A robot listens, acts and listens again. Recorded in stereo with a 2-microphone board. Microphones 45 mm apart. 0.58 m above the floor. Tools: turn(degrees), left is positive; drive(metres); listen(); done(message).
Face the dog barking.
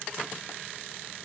listen()
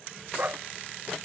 turn(degrees=-40)
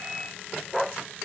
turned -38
done("Facing the dog barking.")